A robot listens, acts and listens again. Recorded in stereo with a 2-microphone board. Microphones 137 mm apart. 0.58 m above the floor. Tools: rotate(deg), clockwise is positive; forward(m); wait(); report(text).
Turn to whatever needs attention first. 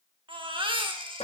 rotate(35)
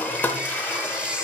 rotate(10)
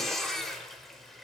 report("Found it: a baby crying, straight ahead.")